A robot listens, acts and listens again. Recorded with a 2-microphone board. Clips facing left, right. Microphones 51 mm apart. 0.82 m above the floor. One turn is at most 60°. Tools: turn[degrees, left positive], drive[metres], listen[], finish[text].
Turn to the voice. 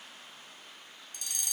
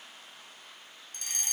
Action: listen[]
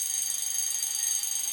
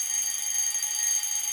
Action: listen[]
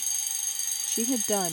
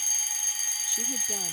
Thought: The woman speaking: about 70° left or 110° left.
Action: turn[60]
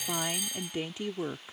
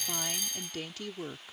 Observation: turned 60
Thought: So it is at 20° left.
Action: turn[20]
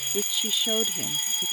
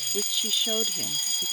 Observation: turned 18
Action: finish[Found it: a woman speaking, straight ahead.]